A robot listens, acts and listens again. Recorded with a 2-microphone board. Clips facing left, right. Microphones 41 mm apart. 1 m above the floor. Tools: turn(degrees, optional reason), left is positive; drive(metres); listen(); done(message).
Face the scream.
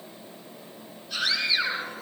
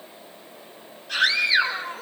turn(degrees=-70, reason="The scream: about 70° right or 110° right.")
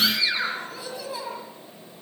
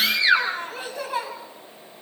turn(degrees=-40, reason="So it is at 40° right.")
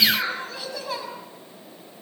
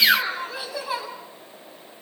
turn(degrees=-10, reason="The scream is now 10° right.")
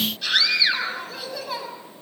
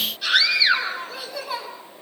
done("Facing the scream, over 4 m away.")